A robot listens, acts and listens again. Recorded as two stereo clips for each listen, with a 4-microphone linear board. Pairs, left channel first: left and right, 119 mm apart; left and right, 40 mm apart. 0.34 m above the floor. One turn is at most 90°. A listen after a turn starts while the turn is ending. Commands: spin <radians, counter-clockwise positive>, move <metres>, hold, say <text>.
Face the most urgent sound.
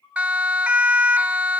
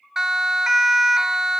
spin -0.52
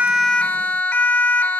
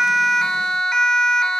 spin 0.35
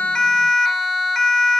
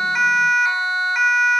say Found it: a siren, straight ahead.